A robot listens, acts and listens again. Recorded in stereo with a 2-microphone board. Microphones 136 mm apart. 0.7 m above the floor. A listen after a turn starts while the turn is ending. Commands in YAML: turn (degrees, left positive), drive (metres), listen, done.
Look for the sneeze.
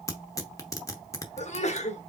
turn: 50
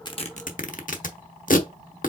listen: true
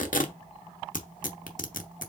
done: "I heard a sneeze, but can't make it out now. It was about straight ahead or 80° left."